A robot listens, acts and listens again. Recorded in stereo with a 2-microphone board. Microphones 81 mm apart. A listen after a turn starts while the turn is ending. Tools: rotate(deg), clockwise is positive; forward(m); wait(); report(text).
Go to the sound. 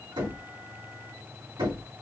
rotate(90)
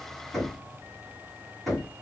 forward(1.0)
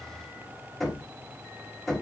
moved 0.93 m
forward(1.0)
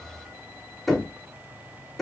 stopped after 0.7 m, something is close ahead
report("Arrived at the knocking, straight ahead.")